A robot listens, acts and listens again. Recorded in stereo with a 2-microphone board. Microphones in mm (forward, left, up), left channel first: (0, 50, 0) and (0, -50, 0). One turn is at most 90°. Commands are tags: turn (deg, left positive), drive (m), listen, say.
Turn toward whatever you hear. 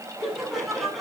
<turn deg="30"/>
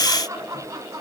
<turn deg="-30"/>
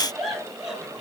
<say>Found it: laughter, straight ahead.</say>